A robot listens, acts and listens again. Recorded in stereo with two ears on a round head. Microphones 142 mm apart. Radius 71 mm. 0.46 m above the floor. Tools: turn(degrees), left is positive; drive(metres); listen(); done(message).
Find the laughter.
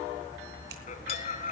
turn(degrees=50)
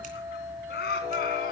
turn(degrees=65)
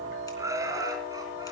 turn(degrees=-25)
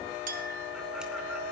listen()
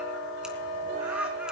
listen()
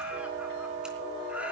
turn(degrees=-10)
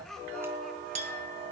done("Found it: laughter, straight ahead, over 4 m away.")